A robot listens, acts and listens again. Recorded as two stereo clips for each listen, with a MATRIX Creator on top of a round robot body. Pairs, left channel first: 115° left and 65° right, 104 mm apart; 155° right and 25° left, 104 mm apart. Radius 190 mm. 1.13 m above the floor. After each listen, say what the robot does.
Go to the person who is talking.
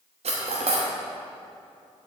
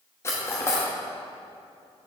Keep listening.
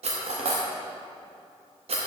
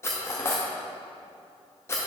Keep listening.
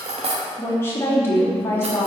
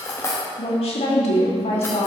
Turn 180° left.
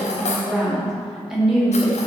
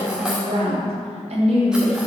Turn 20° left.
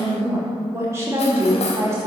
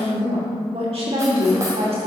Drive 1.0 m forward.
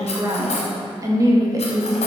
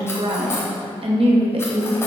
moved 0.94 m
Turn 10° right.
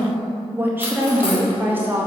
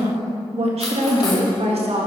Drive 1.0 m forward.
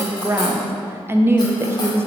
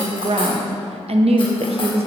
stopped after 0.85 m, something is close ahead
I am next to the woman speaking.